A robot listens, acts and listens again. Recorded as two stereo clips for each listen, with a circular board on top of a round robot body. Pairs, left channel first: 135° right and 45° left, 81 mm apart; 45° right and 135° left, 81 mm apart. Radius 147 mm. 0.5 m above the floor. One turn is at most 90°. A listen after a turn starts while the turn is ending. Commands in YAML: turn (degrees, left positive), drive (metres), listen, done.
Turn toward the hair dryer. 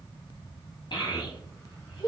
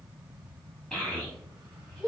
listen: true
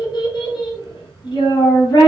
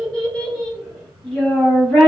listen: true
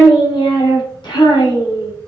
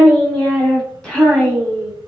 done: "I can't make out a hair dryer, only a child speaking."